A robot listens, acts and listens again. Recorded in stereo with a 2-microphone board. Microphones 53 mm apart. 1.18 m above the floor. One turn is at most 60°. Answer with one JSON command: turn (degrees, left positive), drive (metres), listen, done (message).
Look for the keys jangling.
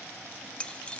{"turn": 20}
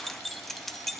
{"done": "Found it: keys jangling, straight ahead, 1 to 2 m away."}